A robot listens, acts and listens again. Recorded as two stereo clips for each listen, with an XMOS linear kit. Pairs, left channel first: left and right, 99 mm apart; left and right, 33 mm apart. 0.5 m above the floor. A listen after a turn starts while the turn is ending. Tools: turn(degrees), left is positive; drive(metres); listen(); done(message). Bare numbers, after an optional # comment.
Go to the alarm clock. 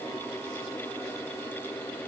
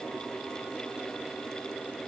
listen()
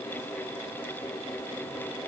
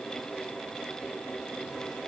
listen()
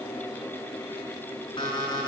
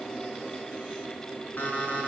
# The alarm clock: about 50° left or 130° left.
turn(50)
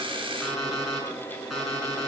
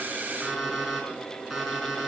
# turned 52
drive(1.0)
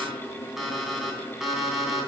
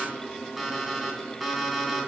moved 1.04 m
drive(1.0)
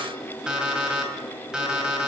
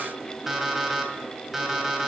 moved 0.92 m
# The alarm clock is now 10° right.
turn(-10)
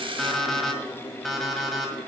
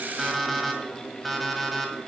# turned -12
drive(1.0)
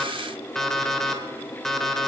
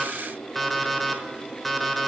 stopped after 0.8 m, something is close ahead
done("Arrived at the alarm clock, straight ahead.")